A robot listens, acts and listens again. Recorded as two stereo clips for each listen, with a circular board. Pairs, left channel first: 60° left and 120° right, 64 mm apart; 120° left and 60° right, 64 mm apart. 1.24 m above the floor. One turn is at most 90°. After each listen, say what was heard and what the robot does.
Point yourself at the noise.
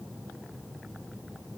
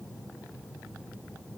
Keep listening.
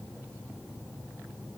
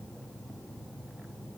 Keep listening.
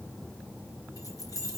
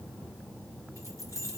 The keys jangling: 80° left. Turn 80° left.
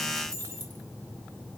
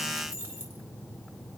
Facing the keys jangling, 2 to 4 m away.